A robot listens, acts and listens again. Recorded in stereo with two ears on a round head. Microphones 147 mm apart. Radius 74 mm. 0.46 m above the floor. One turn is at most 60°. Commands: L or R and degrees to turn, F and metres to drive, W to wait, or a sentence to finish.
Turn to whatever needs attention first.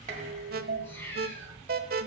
R60
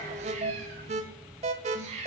R45
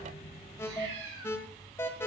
L15
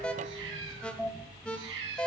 Facing the alarm, 1 to 2 m away.